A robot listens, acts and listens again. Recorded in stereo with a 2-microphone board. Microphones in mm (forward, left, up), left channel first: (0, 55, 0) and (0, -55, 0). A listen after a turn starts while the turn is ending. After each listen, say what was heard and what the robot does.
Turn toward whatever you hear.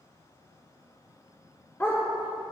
The dog barking: about 20° left or 160° left. Turn 20° left.
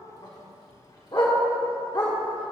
So it is at 135° left. Turn 135° left.
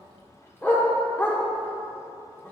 The dog barking is now 20° left. Turn 20° left.
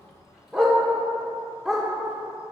Facing the dog barking.